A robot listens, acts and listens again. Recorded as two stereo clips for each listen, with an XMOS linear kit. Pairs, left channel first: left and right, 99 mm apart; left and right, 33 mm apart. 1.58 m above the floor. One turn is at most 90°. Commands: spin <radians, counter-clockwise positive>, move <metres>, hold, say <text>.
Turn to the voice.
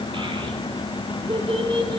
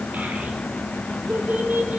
spin -1.13
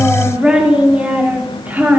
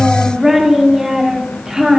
spin -0.35
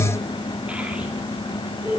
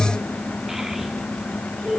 spin -0.35
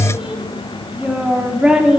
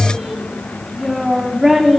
spin -0.17
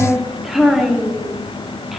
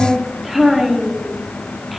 say Found it: a child speaking, straight ahead, 2 to 4 m away.